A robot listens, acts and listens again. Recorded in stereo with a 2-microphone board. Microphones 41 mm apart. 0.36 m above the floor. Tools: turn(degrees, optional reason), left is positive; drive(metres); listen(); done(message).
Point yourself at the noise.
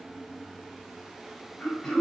turn(degrees=35, reason="The throat clearing: about 35° left or 145° left.")
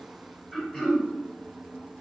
done("Facing the throat clearing.")